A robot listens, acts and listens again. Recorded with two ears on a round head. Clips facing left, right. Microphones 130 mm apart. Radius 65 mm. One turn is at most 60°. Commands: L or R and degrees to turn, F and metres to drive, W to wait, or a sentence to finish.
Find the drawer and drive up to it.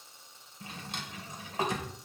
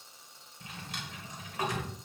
L25
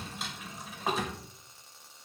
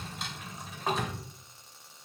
F1.0
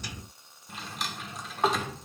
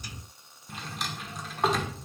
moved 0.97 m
F1.0
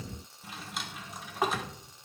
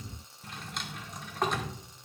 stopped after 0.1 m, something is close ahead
I am next to the drawer.